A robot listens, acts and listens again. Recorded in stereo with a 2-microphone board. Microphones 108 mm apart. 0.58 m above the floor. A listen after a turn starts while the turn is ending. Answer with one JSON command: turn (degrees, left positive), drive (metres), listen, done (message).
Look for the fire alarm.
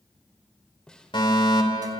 {"turn": 55}
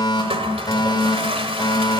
{"turn": 55}
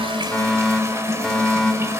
{"done": "Facing the fire alarm, 2 to 4 m away."}